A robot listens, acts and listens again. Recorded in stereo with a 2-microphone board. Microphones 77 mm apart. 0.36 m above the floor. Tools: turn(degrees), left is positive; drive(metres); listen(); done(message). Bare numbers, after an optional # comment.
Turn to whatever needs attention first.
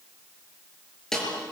listen()
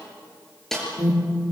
# The alarm: about 50° right or 130° right.
turn(-50)
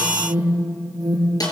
# So it is at 75° right.
turn(-75)
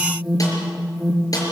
done("Facing the alarm.")